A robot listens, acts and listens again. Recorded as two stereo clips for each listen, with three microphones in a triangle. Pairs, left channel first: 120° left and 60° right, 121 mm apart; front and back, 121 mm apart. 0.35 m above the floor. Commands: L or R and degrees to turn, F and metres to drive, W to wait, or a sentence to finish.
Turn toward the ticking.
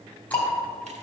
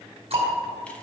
R165
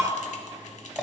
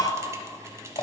L30
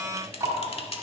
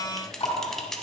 Found it: ticking, straight ahead, 2 to 4 m away.